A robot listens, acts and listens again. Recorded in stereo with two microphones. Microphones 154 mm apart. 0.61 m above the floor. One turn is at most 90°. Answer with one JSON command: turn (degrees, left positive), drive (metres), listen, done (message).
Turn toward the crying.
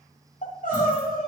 {"turn": 65}
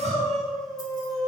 {"turn": 45}
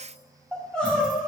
{"done": "Found it: crying, straight ahead, 2 to 4 m away."}